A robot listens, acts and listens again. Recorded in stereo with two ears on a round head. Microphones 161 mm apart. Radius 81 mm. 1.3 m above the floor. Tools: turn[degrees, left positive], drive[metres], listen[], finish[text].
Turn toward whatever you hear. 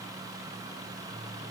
Action: listen[]
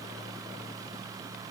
Action: listen[]
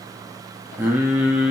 Action: turn[-30]
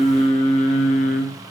Thought: So it is at 45° left.
Action: turn[45]
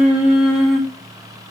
Action: finish[Facing the singing.]